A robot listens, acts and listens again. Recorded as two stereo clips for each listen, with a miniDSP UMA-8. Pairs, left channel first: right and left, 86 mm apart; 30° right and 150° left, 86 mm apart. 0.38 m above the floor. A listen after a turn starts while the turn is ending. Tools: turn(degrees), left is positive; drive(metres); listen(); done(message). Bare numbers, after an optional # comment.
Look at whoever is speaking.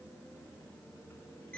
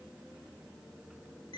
listen()
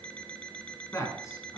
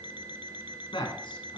# The man speaking: 40° right.
turn(-40)
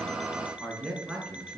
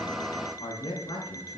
# The man speaking is now 10° right.
turn(-10)
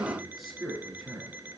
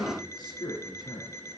done("Found it: a man speaking, straight ahead.")